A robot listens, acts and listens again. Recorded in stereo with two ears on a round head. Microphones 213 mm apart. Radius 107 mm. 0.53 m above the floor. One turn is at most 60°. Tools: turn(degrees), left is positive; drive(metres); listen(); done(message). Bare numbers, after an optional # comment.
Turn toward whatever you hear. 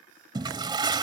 # The toilet flushing: about 20° right or 160° right.
turn(-20)
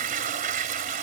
# So it is at 140° right.
turn(-60)
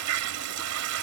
# The toilet flushing is now 85° right.
turn(-60)
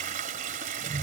# The toilet flushing is now 40° right.
turn(-40)
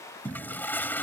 # The toilet flushing is now 10° left.
turn(10)
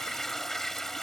done("Found it: a toilet flushing, straight ahead.")